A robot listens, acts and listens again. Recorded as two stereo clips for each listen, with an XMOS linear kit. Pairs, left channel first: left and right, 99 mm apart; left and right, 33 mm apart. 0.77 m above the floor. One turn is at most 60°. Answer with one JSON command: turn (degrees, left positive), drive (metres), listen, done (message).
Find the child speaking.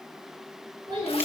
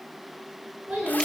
{"turn": -50}
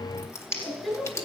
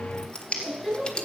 {"done": "Found it: a child speaking, straight ahead."}